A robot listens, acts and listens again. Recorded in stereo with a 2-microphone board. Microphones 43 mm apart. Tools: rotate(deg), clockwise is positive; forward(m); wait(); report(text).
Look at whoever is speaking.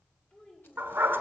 rotate(-30)
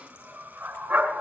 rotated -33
wait()
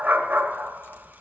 wait()
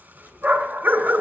report("I heard a child speaking, but can't make it out now. It was about 5° right or 120° left.")